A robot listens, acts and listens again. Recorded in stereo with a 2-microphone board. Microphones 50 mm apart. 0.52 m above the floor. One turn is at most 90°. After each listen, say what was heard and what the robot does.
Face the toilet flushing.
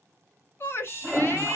Turn 30° left.
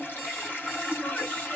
So it is at 140° left. Turn 90° left.
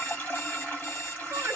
The toilet flushing is now 35° left. Turn 35° left.
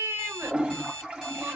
The toilet flushing is now 20° right. Turn 20° right.
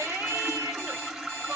Facing the toilet flushing.